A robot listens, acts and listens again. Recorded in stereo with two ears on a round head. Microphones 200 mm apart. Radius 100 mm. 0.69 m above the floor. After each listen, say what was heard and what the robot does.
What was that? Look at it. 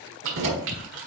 The keys jangling: about 60° right or 120° right. Turn 60° right.
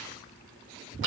So it is at 55° right. Turn 55° right.
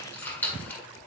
The keys jangling is now 10° left. Turn 10° left.
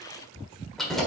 Found it: keys jangling, straight ahead.